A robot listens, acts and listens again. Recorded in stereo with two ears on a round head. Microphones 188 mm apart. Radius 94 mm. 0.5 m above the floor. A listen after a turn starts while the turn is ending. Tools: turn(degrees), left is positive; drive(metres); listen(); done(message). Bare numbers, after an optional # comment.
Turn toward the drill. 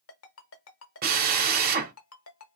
# The drill: about 45° right or 135° right.
turn(-45)
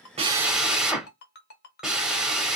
done("Facing the drill.")